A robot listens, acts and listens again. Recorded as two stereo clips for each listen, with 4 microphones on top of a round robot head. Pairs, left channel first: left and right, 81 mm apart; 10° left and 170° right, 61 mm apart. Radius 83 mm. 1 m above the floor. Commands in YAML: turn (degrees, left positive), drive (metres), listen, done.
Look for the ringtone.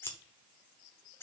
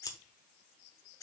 listen: true
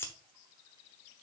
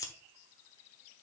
listen: true
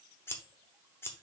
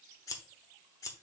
done: "I can't make out a ringtone to turn to."